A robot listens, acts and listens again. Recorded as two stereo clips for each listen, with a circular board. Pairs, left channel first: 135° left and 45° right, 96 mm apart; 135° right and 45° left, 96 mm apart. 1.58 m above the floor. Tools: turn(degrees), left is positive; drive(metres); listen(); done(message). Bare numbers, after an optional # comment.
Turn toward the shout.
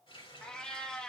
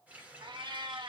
listen()
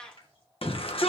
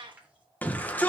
# The shout: 150° left.
turn(150)
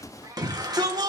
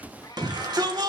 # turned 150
done("Found it: a shout, straight ahead, 1 to 2 m away.")